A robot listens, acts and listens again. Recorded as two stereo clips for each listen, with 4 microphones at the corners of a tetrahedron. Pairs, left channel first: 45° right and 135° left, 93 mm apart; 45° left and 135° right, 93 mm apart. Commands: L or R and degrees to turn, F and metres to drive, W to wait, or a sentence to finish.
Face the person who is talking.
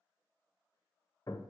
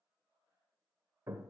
W
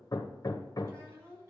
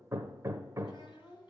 L75
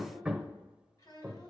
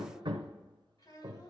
Facing the child speaking, over 4 m away.